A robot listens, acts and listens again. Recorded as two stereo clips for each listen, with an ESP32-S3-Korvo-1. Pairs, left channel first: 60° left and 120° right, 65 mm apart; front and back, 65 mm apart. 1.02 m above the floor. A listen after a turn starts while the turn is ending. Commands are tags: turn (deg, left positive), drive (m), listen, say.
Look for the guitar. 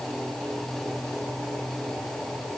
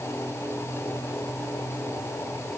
<listen/>
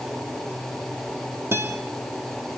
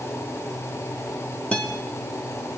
<turn deg="-70"/>
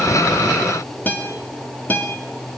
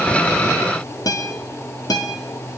<say>Facing the guitar, 2 to 4 m away.</say>